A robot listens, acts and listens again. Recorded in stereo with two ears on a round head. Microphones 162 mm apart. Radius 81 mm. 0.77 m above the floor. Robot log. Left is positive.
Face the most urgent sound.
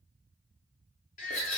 note: The baby crying: about 45° left or 135° left.
cmd yaw +45
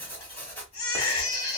note: So it is at 90° left.
cmd yaw +90
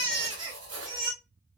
note: The baby crying is now 25° right.
cmd yaw -25
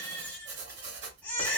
note: The baby crying is now 10° left.
cmd yaw +10
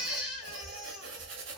end: Found it: a baby crying, straight ahead.